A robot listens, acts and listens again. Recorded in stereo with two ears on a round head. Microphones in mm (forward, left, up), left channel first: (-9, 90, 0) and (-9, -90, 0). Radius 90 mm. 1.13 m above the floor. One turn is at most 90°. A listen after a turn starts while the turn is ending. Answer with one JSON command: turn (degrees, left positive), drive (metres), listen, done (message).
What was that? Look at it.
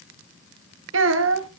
{"turn": -65}
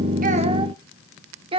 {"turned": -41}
{"turn": -25}
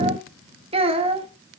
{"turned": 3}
{"turn": -30}
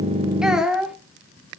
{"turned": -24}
{"done": "Found it: a child speaking, straight ahead."}